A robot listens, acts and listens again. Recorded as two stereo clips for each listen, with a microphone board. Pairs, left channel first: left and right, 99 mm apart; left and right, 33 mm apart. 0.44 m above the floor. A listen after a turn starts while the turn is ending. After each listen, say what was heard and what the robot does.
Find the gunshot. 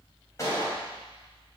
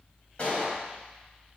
The gunshot: about 30° left or 150° left. Turn 30° left.
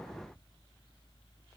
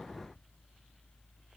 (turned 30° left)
Keep listening.
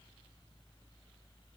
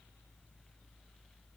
I heard a gunshot, but can't make it out now. It was about straight ahead or 120° left.